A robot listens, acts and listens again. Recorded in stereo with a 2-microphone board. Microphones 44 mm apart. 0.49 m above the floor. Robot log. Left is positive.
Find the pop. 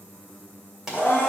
cmd yaw -30
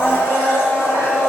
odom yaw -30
cmd idle
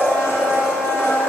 end: I heard a pop, but can't make it out now. It was about 25° left or 145° right.